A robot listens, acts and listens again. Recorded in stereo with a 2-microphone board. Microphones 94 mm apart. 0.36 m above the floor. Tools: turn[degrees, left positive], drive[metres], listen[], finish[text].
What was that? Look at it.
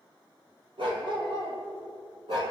Thought: The dog barking: about 60° right or 120° right.
Action: turn[-60]
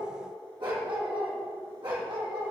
Thought: So it is at 65° right.
Action: turn[-65]
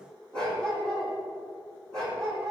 Action: finish[Facing the dog barking, over 4 m away.]